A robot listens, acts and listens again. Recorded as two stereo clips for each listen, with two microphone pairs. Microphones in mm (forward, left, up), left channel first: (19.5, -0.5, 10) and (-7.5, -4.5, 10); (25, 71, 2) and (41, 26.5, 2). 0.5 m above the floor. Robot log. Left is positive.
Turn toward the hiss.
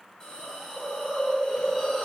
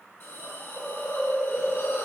note: The hiss: 80° left.
cmd yaw +80
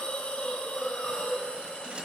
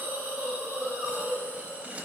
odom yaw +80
end: Facing the hiss.